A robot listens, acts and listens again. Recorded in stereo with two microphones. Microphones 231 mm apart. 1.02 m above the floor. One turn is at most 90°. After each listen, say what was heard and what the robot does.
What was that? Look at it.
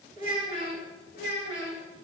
The child speaking: about 55° left or 125° left. Turn 55° left.
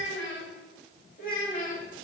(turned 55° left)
So it is at 30° left. Turn 30° left.
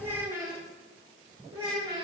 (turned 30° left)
The child speaking is now 25° right. Turn 25° right.
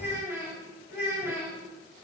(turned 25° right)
The child speaking is now 10° right. Turn 10° right.
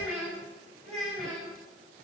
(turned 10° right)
Found it: a child speaking, straight ahead, 2 to 4 m away.